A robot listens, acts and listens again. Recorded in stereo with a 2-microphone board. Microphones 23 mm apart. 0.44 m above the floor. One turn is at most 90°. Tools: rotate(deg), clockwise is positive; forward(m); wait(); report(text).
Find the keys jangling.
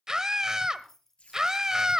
rotate(-15)
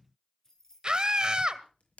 rotate(-20)
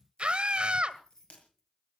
rotate(-20)
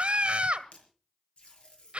wait()
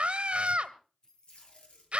rotate(-30)
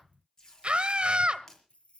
rotate(-90)
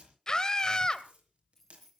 rotate(-15)
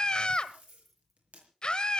report("Facing the keys jangling.")